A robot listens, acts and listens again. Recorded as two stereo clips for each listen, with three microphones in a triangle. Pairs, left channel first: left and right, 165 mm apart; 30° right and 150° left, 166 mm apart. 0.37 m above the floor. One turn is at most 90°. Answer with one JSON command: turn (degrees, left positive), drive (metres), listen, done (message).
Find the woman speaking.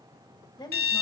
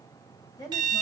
{"turn": 30}
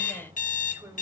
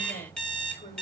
{"listen": true}
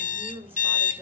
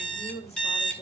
{"turn": -15}
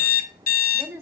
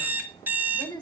{"turn": -35}
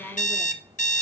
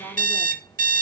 {"listen": true}
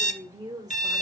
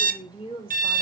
{"turn": -45}
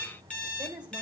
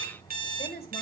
{"turn": -10}
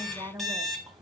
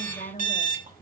{"done": "Found it: a woman speaking, straight ahead."}